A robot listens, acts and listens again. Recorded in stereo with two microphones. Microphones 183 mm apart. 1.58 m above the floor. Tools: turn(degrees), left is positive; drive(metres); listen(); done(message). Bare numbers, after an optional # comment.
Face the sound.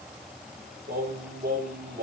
# The singing: about 65° right or 115° right.
turn(-65)
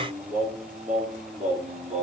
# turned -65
# So it is at 45° right.
turn(-45)
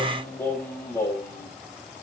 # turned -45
# The singing is now 15° left.
turn(15)
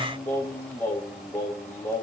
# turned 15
# The singing is now 10° left.
turn(10)
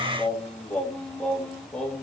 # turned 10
done("Found it: singing, straight ahead.")